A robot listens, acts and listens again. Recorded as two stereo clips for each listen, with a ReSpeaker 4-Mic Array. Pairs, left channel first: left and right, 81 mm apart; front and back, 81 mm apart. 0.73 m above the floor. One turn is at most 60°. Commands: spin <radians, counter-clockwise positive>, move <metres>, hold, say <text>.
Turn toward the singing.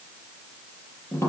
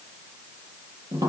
hold
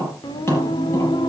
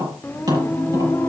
spin 1.05
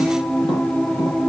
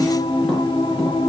say Facing the singing.